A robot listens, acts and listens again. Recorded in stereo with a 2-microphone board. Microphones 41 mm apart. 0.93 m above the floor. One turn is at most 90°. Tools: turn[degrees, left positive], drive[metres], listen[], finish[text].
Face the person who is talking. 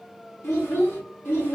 Thought: The child speaking: about 70° left or 110° left.
Action: turn[70]
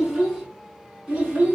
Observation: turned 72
Thought: So it is at 30° right.
Action: turn[-30]
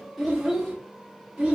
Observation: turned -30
Thought: The child speaking is now 20° right.
Action: turn[-20]
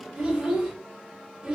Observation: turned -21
Thought: The child speaking is now 15° right.
Action: turn[-15]
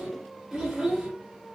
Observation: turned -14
Action: finish[Found it: a child speaking, straight ahead, 2 to 4 m away.]